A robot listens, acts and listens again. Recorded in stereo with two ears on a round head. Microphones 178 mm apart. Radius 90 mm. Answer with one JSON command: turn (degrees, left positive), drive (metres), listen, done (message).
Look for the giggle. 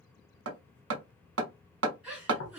{"turn": -30}
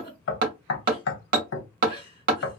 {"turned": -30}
{"turn": 25}
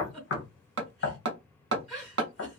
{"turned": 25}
{"done": "Facing the giggle, 1 to 2 m away."}